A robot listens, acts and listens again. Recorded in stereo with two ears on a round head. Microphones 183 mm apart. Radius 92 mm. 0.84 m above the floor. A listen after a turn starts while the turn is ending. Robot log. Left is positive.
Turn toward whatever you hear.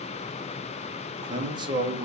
note: The man speaking: about 25° right or 155° right.
cmd yaw -25
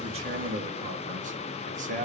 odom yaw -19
note: So it is at 140° right.
cmd yaw -140
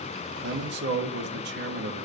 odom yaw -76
note: The man speaking is now 60° right.
cmd yaw -60
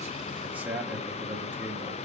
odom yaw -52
note: The man speaking is now 10° right.
cmd yaw -10
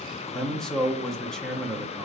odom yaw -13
end: Facing the man speaking, under 1 m away.